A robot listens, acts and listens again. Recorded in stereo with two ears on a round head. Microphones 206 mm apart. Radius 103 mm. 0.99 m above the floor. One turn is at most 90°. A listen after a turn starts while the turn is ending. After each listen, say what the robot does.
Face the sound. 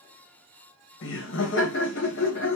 Turn 55° left.
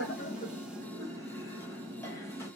Turn 15° left.
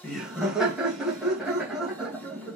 Facing the laughter, 1 to 2 m away.